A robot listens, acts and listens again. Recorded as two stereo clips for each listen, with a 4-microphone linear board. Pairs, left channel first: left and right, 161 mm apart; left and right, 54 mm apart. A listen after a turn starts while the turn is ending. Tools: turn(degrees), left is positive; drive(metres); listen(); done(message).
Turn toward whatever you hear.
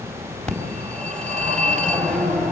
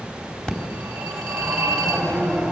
turn(degrees=30)
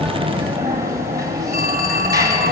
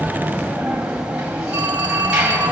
turn(degrees=-20)
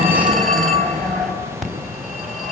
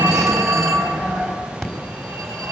done("Found it: a phone ringing, straight ahead.")